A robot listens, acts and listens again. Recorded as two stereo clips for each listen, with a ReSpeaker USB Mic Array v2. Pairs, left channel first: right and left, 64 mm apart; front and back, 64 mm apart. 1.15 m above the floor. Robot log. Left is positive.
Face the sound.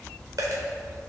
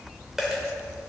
note: The dropped coin: 95° left.
cmd yaw +95
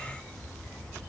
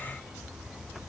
end: I heard a dropped coin from this way, but can't make it out now.